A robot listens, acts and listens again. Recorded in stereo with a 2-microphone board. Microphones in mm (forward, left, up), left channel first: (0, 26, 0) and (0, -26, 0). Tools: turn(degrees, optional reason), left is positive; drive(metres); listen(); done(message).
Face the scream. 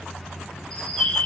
listen()
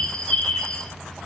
listen()
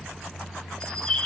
done("I can't make out a scream to turn to.")